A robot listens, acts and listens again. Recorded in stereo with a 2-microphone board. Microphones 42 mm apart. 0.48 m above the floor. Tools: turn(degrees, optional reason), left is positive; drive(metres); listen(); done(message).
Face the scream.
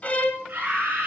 turn(degrees=-50, reason="The scream: about 50° right or 130° right.")
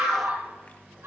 turn(degrees=-80, reason="So it is at 80° right.")
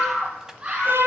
turn(degrees=-25, reason="The scream is now 25° right.")
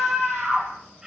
turn(degrees=-15, reason="The scream is now 15° right.")
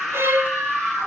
done("Found it: a scream, straight ahead.")